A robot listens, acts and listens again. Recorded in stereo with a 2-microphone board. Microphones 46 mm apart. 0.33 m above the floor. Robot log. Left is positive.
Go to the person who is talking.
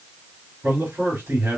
note: The man speaking: about 60° right or 120° right.
cmd yaw -60
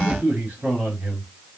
note: So it is at 50° right.
cmd yaw -50
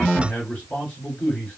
note: The man speaking is now 20° left.
cmd yaw +20
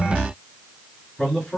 cmd fwd 1.0
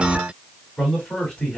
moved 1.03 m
cmd fwd 1.0
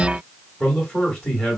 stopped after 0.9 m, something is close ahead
end: Arrived at the man speaking, straight ahead.